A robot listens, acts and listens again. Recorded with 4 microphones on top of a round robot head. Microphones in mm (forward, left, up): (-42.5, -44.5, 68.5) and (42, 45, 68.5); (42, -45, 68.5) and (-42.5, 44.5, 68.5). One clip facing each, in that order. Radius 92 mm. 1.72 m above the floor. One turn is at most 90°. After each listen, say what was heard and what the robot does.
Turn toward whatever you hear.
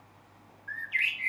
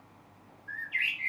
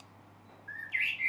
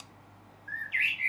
The bird: straight behind. Turn 90° left.
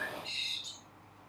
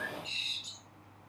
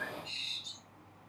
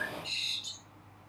The bird is now 120° left. Turn 90° left.
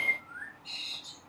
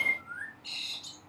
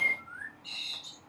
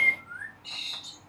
The bird is now 45° left. Turn 45° left.
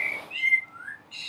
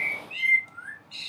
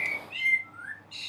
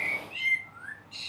The bird is now 15° right. Turn 15° right.
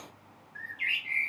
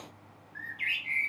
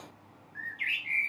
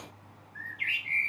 Facing the bird.